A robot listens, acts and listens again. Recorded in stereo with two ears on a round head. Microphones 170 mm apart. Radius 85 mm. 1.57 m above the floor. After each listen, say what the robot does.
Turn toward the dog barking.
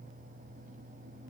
Keep listening.
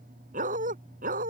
Turn 50° right.
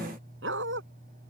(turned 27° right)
Turn 105° right.
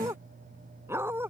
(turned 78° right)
Turn 10° right.
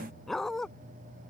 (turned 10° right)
Found it: a dog barking, straight ahead.